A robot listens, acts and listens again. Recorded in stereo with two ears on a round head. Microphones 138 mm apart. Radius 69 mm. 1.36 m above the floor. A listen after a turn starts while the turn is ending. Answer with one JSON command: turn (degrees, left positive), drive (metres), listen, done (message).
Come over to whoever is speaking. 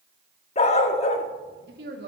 {"turn": -70}
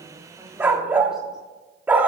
{"listen": true}
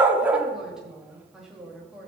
{"drive": 1.0}
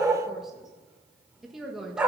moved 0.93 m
{"drive": 1.0}
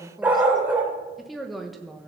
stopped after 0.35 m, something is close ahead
{"done": "Arrived at the woman speaking, straight ahead."}